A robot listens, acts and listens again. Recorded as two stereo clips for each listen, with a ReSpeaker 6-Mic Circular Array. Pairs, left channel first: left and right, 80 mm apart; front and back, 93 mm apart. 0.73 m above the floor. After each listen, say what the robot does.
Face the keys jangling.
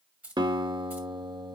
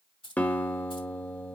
Turn 20° right.
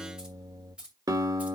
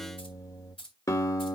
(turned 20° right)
Turn 15° right.
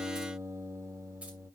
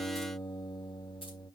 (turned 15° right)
Keep listening.
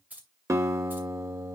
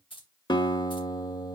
Turn 20° right.
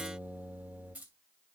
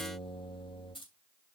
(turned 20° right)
Turn 20° right.
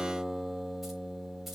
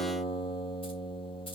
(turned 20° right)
Keep listening.
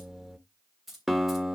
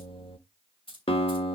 Facing the keys jangling, 2 to 4 m away.